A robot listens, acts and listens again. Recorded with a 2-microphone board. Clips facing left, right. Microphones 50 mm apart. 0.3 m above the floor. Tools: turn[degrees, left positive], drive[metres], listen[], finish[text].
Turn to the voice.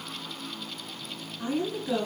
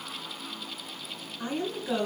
Action: turn[-30]
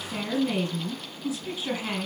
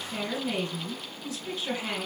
Thought: So it is at 15° left.
Action: turn[15]
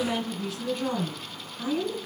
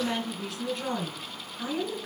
Action: finish[Facing the woman speaking.]